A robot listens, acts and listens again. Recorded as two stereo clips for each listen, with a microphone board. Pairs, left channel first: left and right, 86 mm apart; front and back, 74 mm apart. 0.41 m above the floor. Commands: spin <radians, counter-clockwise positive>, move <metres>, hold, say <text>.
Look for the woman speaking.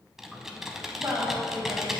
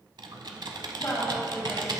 spin -0.87
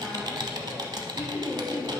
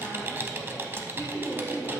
spin -0.44
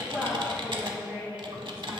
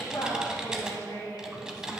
spin -0.44
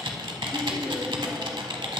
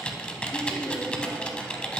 hold
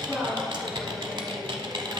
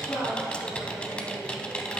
say Facing the woman speaking.